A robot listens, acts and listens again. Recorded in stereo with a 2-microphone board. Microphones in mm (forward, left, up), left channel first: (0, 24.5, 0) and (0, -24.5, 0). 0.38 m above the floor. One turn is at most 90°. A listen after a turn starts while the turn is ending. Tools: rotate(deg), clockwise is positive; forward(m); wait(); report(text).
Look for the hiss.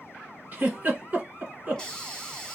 rotate(-30)
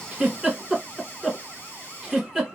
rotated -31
rotate(-90)
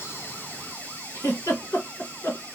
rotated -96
rotate(-45)
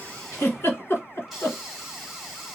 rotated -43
report("Facing the hiss, 1 to 2 m away.")